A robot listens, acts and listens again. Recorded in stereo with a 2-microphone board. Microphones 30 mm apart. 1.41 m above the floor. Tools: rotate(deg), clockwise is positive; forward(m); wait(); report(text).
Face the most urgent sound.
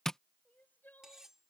rotate(-90)
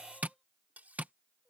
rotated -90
rotate(-10)
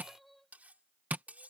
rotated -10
report("Found it: crying, straight ahead.")